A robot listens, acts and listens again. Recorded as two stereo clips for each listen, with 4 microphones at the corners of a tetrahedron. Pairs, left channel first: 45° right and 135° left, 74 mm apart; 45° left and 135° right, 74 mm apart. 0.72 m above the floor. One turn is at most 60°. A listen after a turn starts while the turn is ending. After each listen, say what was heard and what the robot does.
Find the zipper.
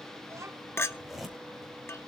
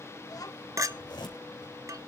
The zipper: 50° left. Turn 50° left.
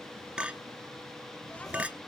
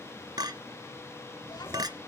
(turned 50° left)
Keep listening.
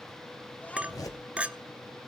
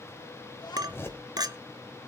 The zipper is now 10° right. Turn 10° right.
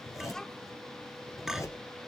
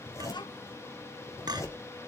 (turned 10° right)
Facing the zipper, 2 to 4 m away.